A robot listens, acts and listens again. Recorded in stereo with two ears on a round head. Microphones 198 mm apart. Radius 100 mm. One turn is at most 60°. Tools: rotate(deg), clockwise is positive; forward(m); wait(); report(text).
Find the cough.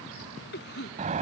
rotate(-45)
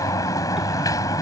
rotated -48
wait()
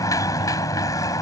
wait()
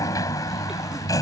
report("I heard a cough, but can't make it out now. It was about straight ahead or 85° left.")